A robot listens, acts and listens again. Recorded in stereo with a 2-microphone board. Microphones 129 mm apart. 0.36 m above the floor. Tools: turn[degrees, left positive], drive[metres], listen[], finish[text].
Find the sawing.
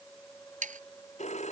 Action: turn[-90]
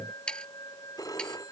Action: finish[Facing the sawing.]